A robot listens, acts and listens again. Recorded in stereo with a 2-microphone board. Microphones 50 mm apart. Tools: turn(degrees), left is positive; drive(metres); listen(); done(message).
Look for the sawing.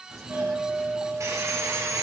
turn(degrees=-70)
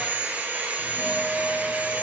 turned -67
turn(degrees=-35)
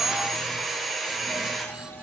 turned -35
done("Facing the sawing.")